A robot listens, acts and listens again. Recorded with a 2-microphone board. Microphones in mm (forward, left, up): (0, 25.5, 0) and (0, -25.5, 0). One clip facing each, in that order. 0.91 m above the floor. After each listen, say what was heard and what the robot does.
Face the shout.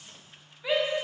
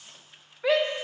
The shout: about 65° right or 115° right. Turn 65° right.
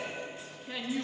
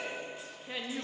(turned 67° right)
So it is at 15° right. Turn 15° right.
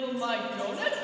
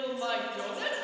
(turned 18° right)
Facing the shout, under 1 m away.